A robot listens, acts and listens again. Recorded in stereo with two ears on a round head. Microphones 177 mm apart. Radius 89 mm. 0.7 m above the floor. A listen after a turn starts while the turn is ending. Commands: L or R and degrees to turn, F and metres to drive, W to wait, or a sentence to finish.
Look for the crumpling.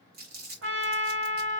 R50
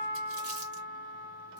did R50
W
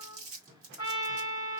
R75
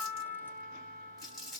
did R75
Facing the crumpling, 1 to 2 m away.